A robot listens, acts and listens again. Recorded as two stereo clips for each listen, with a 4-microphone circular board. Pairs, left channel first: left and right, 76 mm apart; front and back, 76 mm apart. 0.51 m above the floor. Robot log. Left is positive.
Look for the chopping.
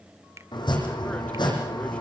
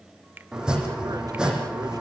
note: The chopping: 100° left.
cmd yaw +100
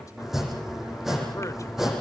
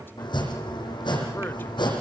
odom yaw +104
end: Facing the chopping.